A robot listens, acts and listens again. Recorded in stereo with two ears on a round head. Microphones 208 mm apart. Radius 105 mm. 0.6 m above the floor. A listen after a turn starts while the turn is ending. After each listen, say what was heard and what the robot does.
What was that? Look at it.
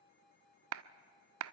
The clap: about 65° right or 115° right. Turn 65° right.
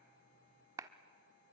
So it is at 15° right. Turn 15° right.
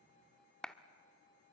Found it: a clap, straight ahead, under 1 m away.